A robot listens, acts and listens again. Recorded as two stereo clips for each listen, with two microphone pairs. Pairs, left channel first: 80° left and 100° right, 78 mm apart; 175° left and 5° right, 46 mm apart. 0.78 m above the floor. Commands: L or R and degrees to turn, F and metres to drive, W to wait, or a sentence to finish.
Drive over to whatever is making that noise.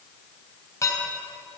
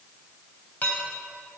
L125
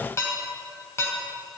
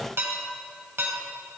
L25
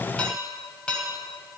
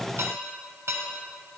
F1.0
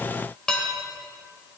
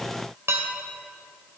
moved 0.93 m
F1.0
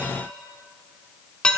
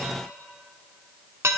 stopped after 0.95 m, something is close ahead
I am next to the dishes clattering.